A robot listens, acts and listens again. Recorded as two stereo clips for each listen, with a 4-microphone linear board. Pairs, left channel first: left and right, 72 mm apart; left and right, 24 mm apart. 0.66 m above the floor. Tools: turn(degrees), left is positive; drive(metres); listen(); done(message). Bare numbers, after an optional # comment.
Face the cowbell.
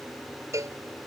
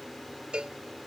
# The cowbell: about 45° right or 135° right.
turn(-45)
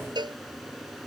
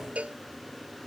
# So it is at 90° right.
turn(-90)
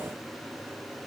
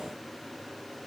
listen()
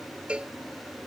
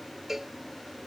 # The cowbell is now 15° right.
turn(-15)
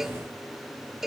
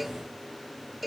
done("Facing the cowbell.")